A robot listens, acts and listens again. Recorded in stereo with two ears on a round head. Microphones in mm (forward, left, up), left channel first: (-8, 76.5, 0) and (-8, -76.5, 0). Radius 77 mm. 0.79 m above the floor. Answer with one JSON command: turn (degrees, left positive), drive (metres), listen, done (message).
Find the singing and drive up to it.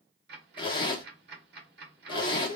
{"turn": -25}
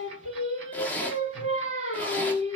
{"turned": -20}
{"turn": -135}
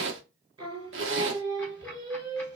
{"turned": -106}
{"turn": -30}
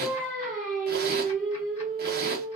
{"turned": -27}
{"drive": 1.0}
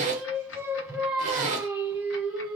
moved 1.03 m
{"turn": -10}
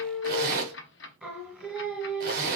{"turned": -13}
{"drive": 1.0}
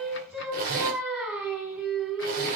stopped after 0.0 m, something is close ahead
{"done": "I am next to the singing."}